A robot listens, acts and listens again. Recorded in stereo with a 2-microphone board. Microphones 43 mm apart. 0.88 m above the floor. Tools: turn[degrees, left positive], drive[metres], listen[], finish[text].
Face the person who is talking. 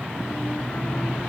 Action: listen[]
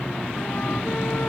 Action: listen[]
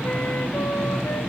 Action: finish[I can't make out anyone speaking to turn to.]